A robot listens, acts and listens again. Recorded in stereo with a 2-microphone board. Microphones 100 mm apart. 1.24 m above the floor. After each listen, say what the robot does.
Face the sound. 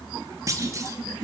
Turn 30° right.
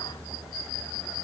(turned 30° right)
Keep listening.
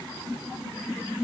I heard a clunk, but can't make it out now. It was about straight ahead or 120° right.